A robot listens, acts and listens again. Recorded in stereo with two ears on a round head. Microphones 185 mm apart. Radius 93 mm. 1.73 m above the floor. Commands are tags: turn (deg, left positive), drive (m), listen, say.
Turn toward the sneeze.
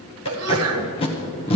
<turn deg="-90"/>
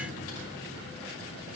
<say>I heard a sneeze from this way, but can't make it out now.</say>